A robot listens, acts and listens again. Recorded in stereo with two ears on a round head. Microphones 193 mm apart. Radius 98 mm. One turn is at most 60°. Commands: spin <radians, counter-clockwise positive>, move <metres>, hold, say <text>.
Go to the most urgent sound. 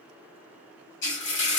hold
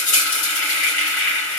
hold
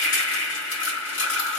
say I can't make out anything urgent to turn to.